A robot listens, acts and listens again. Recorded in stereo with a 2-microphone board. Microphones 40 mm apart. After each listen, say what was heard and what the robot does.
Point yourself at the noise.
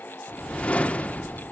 The whoosh: about 35° left or 145° left. Turn 35° left.
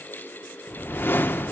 So it is at 110° left. Turn 110° left.
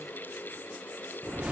The whoosh is now 35° right. Turn 35° right.
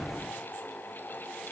Found it: a whoosh, straight ahead.